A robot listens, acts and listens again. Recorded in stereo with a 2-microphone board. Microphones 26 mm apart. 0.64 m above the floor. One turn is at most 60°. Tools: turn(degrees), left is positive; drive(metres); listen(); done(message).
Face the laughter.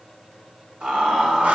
turn(degrees=-55)
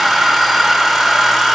listen()
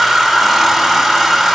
listen()
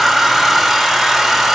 done("I heard laughter, but can't make it out now. It was about straight ahead or 70° right.")